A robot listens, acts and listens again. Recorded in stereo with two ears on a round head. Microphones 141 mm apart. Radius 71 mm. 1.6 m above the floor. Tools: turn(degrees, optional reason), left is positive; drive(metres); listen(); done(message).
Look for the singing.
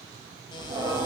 turn(degrees=-25, reason="The singing: about 25° right or 155° right.")
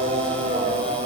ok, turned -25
turn(degrees=-125, reason="So it is at 125° right.")
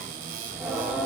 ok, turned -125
done("Found it: singing, straight ahead, 2 to 4 m away.")